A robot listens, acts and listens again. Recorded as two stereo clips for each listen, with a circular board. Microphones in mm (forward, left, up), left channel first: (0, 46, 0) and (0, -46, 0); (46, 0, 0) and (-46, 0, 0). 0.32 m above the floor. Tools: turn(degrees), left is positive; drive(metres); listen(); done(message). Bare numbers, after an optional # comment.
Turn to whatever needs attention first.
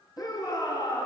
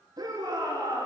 # The shout: 135° left.
turn(135)
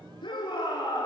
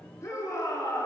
# The shout is now 55° left.
turn(55)
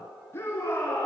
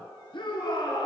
# The shout is now 25° left.
turn(25)
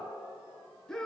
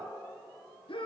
done("Found it: a shout, straight ahead, over 4 m away.")